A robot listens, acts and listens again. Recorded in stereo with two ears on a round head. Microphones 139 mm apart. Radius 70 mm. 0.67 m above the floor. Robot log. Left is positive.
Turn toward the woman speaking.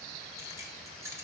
cmd idle
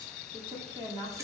note: The woman speaking: about 30° right or 150° right.
cmd yaw -30
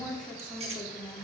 end: Facing the woman speaking.